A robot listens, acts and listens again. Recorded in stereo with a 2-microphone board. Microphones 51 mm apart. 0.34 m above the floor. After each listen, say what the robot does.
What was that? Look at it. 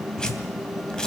Turn 30° left.
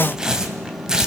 Turn 15° right.
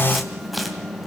Keep listening.
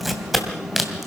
Facing the tearing paper.